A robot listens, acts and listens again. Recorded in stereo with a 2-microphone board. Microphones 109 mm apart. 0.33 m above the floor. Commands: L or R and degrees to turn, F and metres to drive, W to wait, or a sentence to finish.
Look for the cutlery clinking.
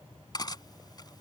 L40
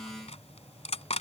L95
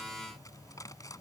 L35
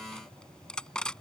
Facing the cutlery clinking.